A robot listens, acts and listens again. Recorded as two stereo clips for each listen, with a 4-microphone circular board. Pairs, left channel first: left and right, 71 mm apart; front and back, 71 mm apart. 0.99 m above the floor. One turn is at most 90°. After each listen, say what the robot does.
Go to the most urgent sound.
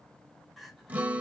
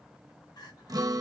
Drive 1.0 m forward.
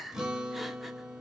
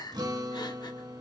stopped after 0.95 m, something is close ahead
Arrived at the crying, straight ahead.